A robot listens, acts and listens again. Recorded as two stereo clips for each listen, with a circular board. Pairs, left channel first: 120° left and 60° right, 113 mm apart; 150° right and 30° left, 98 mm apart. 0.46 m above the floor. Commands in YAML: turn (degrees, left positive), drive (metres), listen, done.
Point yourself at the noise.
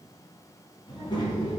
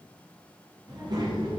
turn: 70
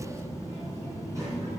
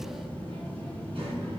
done: "Facing the child speaking, 2 to 4 m away."